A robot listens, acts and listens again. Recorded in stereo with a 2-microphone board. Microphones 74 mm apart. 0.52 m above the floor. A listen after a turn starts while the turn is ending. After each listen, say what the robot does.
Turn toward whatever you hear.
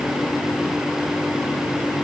Keep listening.
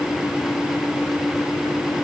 Keep listening.
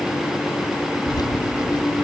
Turn 70° left.
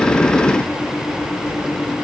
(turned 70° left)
Keep listening.
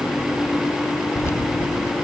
Turn 35° left.
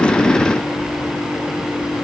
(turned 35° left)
Turn 10° right.
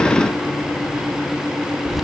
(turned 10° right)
Found it: keys jangling, straight ahead, 2 to 4 m away.